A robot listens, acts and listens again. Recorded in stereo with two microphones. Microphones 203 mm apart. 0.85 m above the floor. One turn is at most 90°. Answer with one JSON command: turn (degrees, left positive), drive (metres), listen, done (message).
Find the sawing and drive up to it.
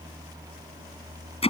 {"listen": true}
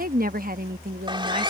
{"turn": -20}
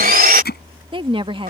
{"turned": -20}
{"turn": -90}
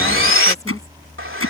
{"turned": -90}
{"turn": -90}
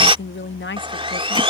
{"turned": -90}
{"turn": -25}
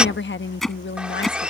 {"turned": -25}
{"drive": 1.0}
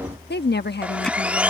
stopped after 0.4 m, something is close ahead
{"done": "Something is in my way. I am facing the sawing but have not reached it."}